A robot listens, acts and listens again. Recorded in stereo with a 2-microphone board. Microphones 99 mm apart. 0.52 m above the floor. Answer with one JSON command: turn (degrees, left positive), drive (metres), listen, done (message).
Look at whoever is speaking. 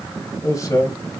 {"turn": 30}
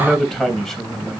{"done": "Found it: a man speaking, straight ahead."}